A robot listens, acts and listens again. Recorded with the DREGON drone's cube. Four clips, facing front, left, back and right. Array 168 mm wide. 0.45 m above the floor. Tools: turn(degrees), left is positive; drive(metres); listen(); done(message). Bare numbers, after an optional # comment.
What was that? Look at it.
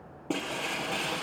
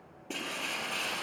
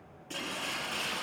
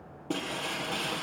# The breaking glass: 15° right.
turn(-15)
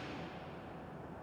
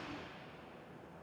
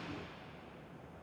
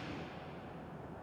done("I heard breaking glass from this way, but can't make it out now.")